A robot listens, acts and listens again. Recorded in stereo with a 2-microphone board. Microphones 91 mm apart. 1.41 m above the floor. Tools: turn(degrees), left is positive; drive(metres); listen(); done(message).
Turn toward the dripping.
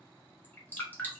turn(degrees=20)
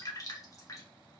turn(degrees=140)
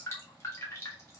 turn(degrees=30)
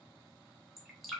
done("Facing the dripping, 1 to 2 m away.")